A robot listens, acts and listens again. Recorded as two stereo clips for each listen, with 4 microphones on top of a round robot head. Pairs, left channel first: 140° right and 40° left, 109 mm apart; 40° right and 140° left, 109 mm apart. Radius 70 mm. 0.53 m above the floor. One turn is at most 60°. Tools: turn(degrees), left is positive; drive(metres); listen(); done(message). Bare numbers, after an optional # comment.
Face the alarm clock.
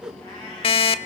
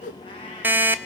# The alarm clock: 155° right.
turn(-60)
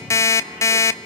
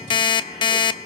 # The alarm clock is now 80° right.
turn(-60)
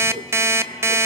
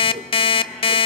# The alarm clock is now 20° right.
turn(-20)
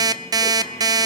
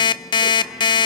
done("Facing the alarm clock, under 1 m away.")